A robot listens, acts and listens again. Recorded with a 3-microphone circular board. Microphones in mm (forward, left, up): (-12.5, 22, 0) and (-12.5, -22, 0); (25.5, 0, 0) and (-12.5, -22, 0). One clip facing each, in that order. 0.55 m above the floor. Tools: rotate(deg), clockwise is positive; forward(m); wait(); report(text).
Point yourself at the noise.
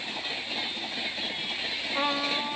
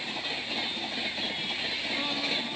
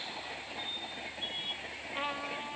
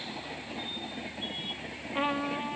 rotate(-135)
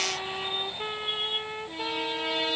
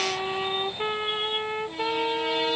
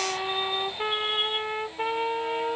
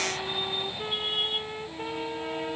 rotate(20)
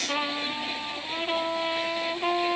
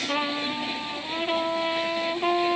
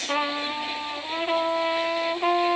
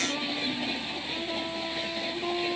report("Facing the trumpet.")